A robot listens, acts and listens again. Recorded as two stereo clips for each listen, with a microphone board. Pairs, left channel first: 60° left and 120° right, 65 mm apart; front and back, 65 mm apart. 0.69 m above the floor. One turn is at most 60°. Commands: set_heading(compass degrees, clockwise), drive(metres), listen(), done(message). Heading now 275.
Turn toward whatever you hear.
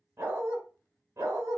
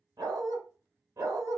set_heading(335)
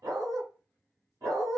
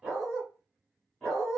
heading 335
set_heading(35)
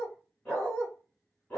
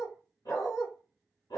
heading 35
set_heading(45)
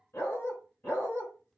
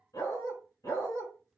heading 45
done("Facing the dog barking, 2 to 4 m away.")